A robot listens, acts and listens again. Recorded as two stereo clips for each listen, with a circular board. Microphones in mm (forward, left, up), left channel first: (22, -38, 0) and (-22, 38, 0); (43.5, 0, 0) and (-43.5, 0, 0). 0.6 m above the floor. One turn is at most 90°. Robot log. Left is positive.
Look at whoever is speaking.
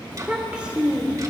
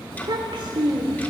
note: The child speaking: 165° right.
cmd yaw -90
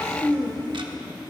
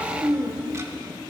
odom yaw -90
note: The child speaking is now 105° right.
cmd yaw -90
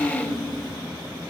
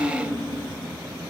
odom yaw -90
note: The child speaking is now 25° right.
cmd yaw -25
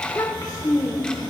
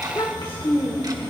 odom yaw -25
note: The child speaking is now 15° right.
cmd yaw -15
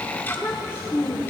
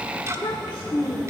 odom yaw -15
end: Found it: a child speaking, straight ahead, 1 to 2 m away.